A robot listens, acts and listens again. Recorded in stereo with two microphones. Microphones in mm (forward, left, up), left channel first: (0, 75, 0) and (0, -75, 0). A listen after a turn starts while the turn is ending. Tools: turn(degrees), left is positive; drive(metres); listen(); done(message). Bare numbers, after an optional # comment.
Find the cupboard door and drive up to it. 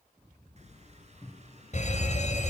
# The cupboard door: about 30° left or 150° left.
turn(30)
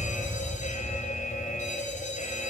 listen()
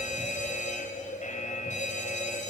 listen()
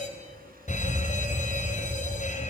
done("I heard a cupboard door, but can't make it out now. It was about straight ahead or 120° left. I did not reach it.")